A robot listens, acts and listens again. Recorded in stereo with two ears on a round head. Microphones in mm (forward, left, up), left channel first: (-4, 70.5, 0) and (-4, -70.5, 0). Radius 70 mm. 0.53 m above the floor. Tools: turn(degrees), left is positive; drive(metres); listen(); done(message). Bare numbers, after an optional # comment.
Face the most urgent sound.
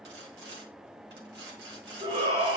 # The shout: about 40° right or 140° right.
turn(-40)
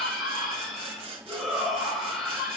done("Facing the shout, 2 to 4 m away.")